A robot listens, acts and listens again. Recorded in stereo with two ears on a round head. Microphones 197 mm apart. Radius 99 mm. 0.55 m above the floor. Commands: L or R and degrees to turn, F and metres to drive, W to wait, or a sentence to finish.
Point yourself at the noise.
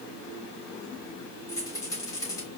L15
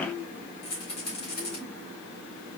L150
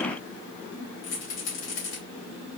L70
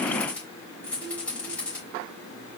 Found it: a rattle, straight ahead, 2 to 4 m away.